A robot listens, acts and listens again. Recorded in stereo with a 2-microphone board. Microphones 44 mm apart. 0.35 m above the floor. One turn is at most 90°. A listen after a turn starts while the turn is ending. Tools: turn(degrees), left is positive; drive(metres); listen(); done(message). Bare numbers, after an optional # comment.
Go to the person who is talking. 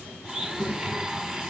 # The child speaking: about 60° right or 120° right.
turn(-60)
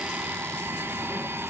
listen()
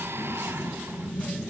drive(1.0)
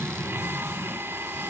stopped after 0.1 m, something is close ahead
done("Something is in my way. I am facing the child speaking but have not reached it.")